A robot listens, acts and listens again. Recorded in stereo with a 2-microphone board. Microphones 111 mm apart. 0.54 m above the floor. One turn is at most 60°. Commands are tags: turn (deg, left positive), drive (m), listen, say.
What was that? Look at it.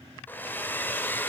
<turn deg="20"/>
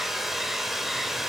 <say>Facing the hair dryer.</say>